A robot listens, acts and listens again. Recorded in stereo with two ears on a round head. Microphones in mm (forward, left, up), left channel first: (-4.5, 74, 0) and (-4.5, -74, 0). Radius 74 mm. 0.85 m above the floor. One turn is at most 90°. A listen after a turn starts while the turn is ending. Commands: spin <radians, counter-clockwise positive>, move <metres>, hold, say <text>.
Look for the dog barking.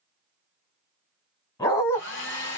spin 0.35
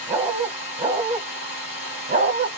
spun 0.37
spin -0.79
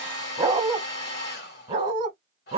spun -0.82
spin -0.70
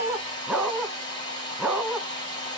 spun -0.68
say Found it: a dog barking, straight ahead.